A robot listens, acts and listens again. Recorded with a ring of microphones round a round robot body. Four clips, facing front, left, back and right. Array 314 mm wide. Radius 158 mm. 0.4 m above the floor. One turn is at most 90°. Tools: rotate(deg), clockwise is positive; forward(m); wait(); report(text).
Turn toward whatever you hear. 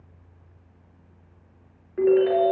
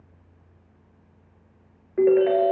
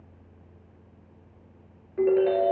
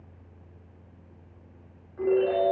rotate(-80)
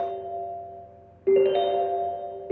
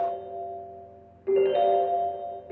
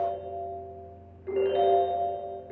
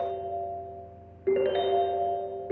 rotate(30)
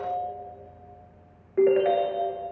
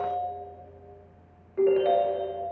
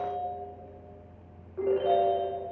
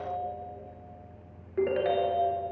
rotate(10)
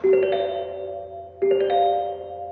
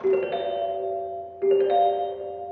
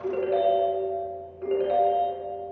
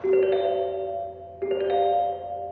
report("Found it: a ringtone, straight ahead.")